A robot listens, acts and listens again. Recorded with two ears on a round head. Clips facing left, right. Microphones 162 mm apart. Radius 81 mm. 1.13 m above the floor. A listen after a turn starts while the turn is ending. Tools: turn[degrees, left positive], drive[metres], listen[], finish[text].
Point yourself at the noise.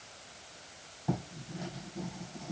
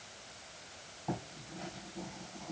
Action: turn[30]
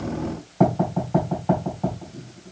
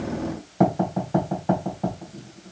Thought: So it is at 15° right.
Action: turn[-15]
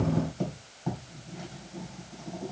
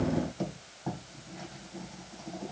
Action: finish[Found it: writing, straight ahead, 2 to 4 m away.]